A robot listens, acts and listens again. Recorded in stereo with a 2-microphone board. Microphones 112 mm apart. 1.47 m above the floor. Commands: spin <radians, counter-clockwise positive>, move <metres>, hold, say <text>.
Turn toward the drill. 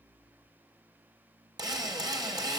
spin -0.61
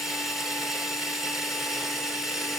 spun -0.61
say Found it: a drill, straight ahead.